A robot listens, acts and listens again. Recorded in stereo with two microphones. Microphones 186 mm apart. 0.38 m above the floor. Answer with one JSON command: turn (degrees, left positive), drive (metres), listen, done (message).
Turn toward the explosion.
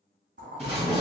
{"turn": -35}
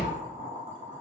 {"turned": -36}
{"listen": true}
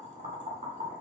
{"done": "I heard an explosion, but can't make it out now. It was about straight ahead or 110° right."}